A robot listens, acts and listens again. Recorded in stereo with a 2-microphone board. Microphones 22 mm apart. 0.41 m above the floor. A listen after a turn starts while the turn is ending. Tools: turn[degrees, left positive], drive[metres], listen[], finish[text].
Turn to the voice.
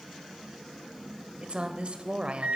Thought: The woman speaking: about 55° right or 125° right.
Action: turn[-55]
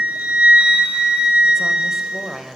Thought: So it is at 25° right.
Action: turn[-25]
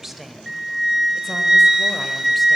Action: listen[]
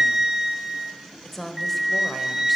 Thought: The woman speaking is now 10° left.
Action: turn[10]
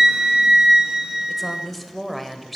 Action: finish[Found it: a woman speaking, straight ahead.]